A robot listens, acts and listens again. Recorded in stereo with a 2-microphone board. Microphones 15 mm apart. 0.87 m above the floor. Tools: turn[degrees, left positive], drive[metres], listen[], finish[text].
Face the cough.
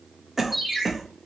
Thought: The cough: about 15° right or 165° right.
Action: turn[-15]
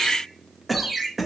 Action: finish[Facing the cough.]